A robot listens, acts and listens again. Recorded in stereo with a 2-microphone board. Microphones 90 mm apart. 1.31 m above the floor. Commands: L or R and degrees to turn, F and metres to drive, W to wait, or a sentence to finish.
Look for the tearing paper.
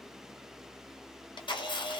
W
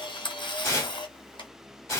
L30
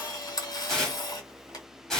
Facing the tearing paper, 1 to 2 m away.